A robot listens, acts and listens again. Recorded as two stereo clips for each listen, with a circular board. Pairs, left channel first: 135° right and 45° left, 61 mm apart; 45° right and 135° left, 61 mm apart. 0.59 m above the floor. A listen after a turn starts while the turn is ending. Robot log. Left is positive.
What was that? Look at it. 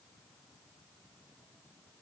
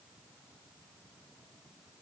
cmd idle
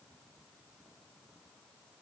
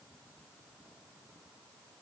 cmd idle
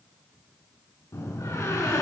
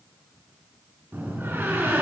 note: The door slam: 170° right.
cmd yaw -170
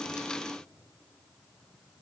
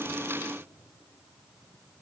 end: I heard a door slam from this way, but can't make it out now.